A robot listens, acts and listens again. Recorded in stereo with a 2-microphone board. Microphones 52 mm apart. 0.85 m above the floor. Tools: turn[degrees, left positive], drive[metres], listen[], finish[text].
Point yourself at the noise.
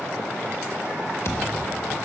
Thought: The thud: about 65° left or 115° left.
Action: turn[65]
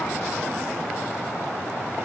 Action: listen[]
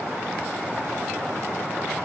Action: finish[I heard a thud, but can't make it out now. It was about straight ahead or 50° left.]